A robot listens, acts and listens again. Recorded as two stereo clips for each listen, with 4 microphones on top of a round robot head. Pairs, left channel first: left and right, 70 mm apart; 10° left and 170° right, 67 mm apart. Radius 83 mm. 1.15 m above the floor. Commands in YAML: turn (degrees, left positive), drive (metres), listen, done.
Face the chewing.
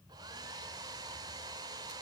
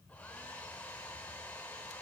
listen: true
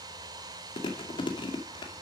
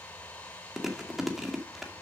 turn: 105
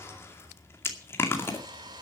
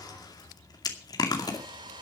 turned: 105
turn: 35
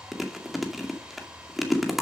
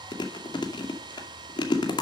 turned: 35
done: "Facing the chewing."